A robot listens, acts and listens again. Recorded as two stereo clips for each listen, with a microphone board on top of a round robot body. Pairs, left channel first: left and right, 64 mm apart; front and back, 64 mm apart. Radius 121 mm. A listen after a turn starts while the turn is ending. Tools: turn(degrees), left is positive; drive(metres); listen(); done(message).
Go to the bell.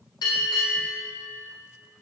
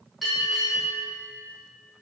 turn(degrees=90)
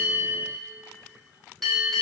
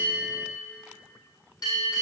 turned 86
drive(metres=1.0)
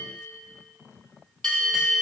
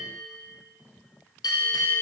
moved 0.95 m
turn(degrees=10)
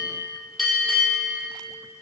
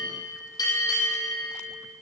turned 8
drive(metres=1.0)
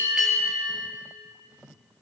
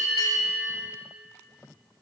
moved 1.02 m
drive(metres=1.0)
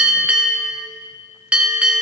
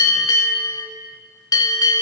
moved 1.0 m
turn(degrees=-20)
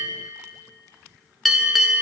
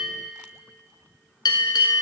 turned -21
drive(metres=1.0)
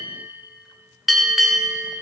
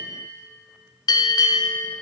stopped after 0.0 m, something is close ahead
done("Arrived at the bell, straight ahead.")